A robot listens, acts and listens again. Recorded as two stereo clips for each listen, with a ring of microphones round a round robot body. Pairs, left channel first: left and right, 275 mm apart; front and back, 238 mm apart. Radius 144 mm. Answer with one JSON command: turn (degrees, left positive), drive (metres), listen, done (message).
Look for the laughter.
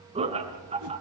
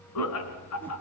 {"turn": -20}
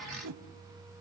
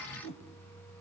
{"listen": true}
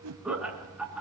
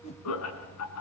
{"done": "Found it: laughter, straight ahead, 2 to 4 m away."}